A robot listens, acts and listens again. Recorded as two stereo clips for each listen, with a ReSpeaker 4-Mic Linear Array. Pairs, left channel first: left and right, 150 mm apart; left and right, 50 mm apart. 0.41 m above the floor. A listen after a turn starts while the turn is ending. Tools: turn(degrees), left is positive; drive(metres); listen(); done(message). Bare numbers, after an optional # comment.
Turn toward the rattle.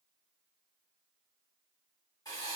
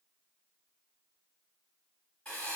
listen()
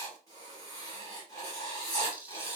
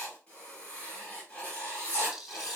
turn(-30)
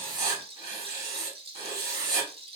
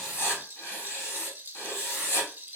# So it is at 140° right.
turn(-140)
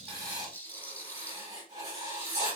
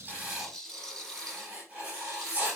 # The rattle is now 10° left.
turn(10)
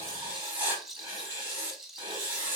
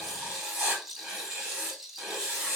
done("Found it: a rattle, straight ahead.")